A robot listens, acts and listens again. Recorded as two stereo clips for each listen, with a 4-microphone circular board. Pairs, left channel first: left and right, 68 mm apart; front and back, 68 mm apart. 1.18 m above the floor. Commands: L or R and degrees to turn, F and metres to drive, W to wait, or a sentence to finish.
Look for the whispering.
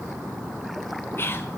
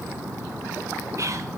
L145
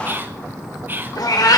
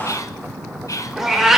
R30
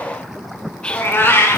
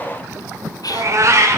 L15
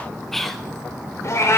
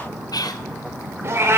Facing the whispering, under 1 m away.